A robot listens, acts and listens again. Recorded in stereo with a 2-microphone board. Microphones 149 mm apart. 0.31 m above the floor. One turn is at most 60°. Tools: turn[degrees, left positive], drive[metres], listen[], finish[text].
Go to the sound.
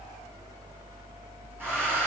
Action: turn[-30]
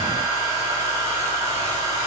Thought: So it is at 135° right.
Action: turn[-60]
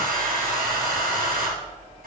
Thought: The hair dryer is now 75° right.
Action: turn[-60]
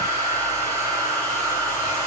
Thought: The hair dryer is now 20° right.
Action: turn[-20]
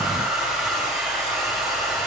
Action: drive[1.0]
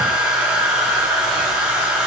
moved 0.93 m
Action: drive[1.0]
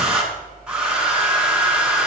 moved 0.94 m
Action: drive[1.0]
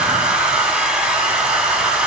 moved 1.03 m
Action: drive[1.0]
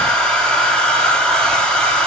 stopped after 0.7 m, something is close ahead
Action: finish[I am next to the hair dryer.]